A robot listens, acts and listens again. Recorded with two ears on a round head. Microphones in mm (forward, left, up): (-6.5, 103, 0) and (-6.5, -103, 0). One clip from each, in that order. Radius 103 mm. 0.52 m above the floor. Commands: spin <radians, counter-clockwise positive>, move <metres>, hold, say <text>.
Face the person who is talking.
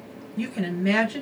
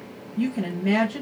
spin 0.87
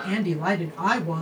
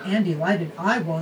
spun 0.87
spin 0.17
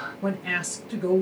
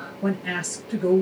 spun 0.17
say Facing the woman speaking.